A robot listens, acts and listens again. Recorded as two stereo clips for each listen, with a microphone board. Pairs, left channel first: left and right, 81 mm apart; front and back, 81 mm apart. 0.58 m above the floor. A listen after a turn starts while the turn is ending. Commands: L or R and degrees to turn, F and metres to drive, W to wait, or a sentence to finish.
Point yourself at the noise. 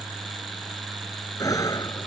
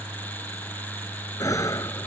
L45
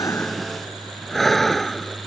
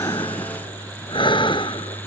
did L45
Found it: breathing, straight ahead.